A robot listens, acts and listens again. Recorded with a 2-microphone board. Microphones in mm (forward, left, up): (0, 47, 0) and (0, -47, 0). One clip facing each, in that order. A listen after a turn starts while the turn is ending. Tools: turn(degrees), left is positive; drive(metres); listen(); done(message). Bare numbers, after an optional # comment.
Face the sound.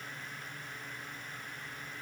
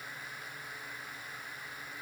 listen()
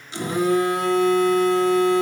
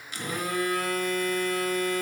# The phone buzzing: about 25° left or 155° left.
turn(25)
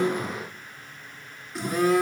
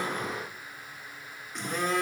done("Facing the phone buzzing, 1 to 2 m away.")